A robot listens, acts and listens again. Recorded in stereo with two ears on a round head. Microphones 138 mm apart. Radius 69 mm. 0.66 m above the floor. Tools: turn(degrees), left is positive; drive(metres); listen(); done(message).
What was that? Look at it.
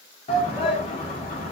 turn(degrees=40)
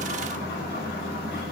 listen()
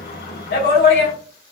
turn(degrees=95)
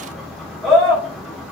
done("Found it: a shout, straight ahead, 1 to 2 m away.")